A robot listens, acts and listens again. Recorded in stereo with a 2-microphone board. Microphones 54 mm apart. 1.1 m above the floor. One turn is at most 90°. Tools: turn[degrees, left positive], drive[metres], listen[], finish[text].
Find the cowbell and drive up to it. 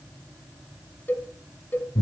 Thought: The cowbell: about 35° left or 145° left.
Action: turn[35]
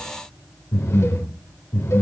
Action: listen[]
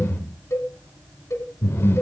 Thought: So it is at 105° left.
Action: turn[90]
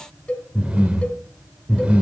Thought: The cowbell is now 25° left.
Action: turn[25]
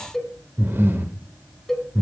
Action: drive[1.0]
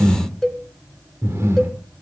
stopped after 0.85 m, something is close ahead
Thought: The cowbell is now 10° left.
Action: turn[10]
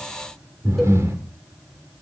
Action: listen[]
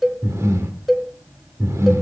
Action: finish[I am next to the cowbell.]